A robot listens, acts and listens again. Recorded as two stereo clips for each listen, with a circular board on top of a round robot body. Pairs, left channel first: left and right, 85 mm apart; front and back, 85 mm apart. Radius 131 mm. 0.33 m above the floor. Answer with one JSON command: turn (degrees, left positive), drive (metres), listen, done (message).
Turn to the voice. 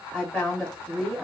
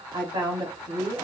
{"turn": -170}
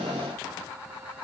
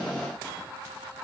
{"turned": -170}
{"listen": true}
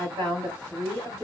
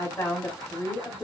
{"turn": -40}
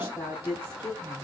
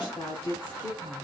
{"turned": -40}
{"done": "Found it: a woman speaking, straight ahead, 2 to 4 m away."}